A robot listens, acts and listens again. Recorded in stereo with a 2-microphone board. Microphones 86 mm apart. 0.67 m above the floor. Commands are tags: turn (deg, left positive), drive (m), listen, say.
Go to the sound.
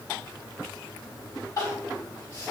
<turn deg="50"/>
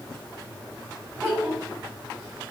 <turn deg="10"/>
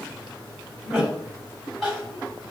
<drive m="1.0"/>
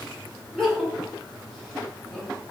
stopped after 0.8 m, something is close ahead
<say>I am next to the crying.</say>